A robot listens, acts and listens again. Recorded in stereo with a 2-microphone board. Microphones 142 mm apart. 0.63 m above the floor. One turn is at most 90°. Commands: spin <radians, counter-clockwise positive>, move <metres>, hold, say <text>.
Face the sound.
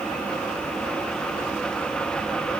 hold
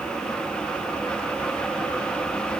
hold
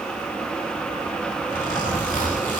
spin 1.57
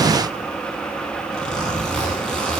say Found it: a zipper, straight ahead, over 4 m away.